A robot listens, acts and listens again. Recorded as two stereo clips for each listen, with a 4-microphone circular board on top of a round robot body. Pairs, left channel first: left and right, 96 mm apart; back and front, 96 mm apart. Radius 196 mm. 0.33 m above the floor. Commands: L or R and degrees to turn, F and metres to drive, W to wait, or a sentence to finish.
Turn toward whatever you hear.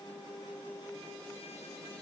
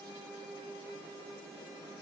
W
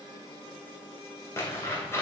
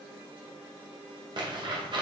L30
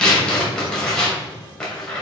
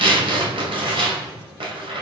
Facing the tearing paper.